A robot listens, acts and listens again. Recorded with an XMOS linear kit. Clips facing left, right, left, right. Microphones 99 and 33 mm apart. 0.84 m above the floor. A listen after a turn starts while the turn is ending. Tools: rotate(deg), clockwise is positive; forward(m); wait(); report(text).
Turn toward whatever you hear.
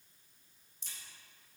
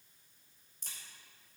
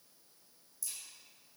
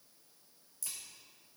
rotate(55)
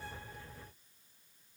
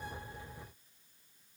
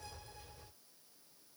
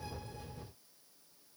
wait()
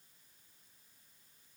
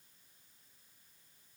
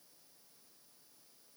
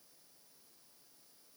report("I heard a crack, but can't make it out now. It was about straight ahead or 70° right.")